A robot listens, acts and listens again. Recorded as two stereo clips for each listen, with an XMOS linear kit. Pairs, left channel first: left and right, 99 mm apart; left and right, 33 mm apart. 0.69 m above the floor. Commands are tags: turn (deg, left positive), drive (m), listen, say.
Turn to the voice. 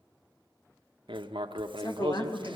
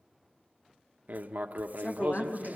<turn deg="35"/>
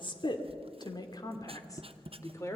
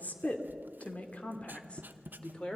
<turn deg="30"/>
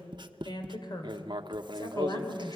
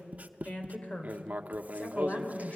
<turn deg="40"/>
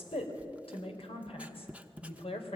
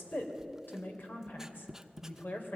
<turn deg="105"/>
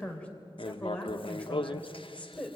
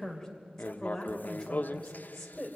<turn deg="10"/>
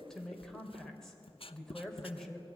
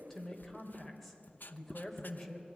<say>Found it: a woman speaking, straight ahead, 2 to 4 m away.</say>